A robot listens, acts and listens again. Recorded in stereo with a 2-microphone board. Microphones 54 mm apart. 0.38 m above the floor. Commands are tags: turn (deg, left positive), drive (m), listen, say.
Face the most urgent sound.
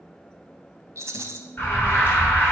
<turn deg="40"/>
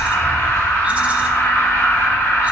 <turn deg="90"/>
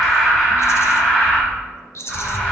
<say>Found it: an alarm, straight ahead.</say>